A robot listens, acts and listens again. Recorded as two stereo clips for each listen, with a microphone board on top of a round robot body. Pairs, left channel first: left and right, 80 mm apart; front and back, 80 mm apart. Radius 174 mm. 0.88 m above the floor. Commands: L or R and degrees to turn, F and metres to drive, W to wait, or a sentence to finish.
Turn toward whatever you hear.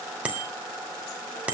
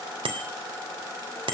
R165
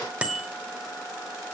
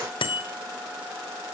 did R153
R15
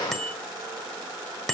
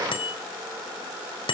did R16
Facing the bicycle bell.